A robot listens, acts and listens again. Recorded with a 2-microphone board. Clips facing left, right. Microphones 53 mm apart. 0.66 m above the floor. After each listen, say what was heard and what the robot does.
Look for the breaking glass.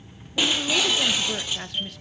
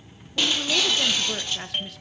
Turn 30° left.
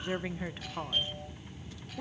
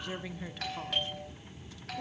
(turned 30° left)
Keep listening.
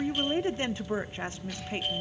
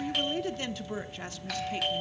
I heard breaking glass, but can't make it out now. It was about 20° right or 140° left.